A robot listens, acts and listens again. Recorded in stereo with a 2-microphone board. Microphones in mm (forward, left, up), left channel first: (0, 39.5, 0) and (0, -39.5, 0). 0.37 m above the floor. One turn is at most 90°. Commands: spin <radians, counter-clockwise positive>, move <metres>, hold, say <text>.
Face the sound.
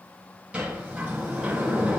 spin -0.26
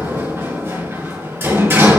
spin -1.57
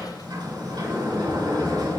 spin -1.57
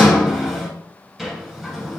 say Found it: a sliding door, straight ahead.